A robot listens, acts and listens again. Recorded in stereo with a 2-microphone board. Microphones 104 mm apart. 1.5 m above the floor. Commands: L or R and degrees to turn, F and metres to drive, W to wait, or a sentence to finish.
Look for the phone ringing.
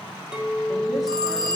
R45
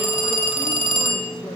R85
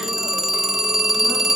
Found it: a phone ringing, straight ahead, under 1 m away.